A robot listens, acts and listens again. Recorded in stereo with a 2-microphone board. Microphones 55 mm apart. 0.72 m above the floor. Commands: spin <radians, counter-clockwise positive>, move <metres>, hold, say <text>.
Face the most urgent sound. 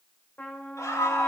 spin 1.57
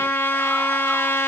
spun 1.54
hold
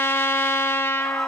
hold
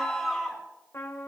say Facing the scream.